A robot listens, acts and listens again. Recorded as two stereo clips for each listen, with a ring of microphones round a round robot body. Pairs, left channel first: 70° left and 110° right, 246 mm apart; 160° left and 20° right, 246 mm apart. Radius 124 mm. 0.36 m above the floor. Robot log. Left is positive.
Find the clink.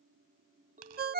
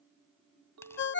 note: The clink: 50° right.
cmd yaw -50
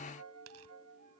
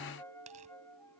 cmd idle
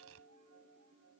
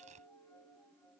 note: The clink is now 10° right.
cmd yaw -10
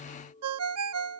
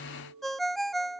end: Facing the clink.